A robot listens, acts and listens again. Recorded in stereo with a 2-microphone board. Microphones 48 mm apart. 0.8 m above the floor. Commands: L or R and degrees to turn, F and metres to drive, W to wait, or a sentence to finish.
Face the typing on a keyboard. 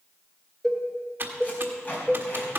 R45
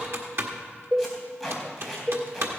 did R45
R80
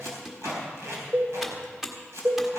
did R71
R10
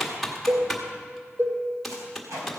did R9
Found it: typing on a keyboard, straight ahead, 1 to 2 m away.